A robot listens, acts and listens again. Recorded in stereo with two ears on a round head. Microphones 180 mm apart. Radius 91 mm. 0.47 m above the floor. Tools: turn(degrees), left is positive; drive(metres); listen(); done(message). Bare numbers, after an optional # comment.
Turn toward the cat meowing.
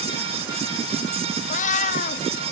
# The cat meowing: about 40° left or 140° left.
turn(40)
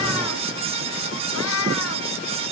# So it is at 95° left.
turn(95)
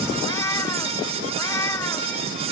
# The cat meowing is now 15° left.
turn(15)
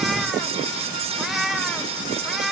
done("Facing the cat meowing.")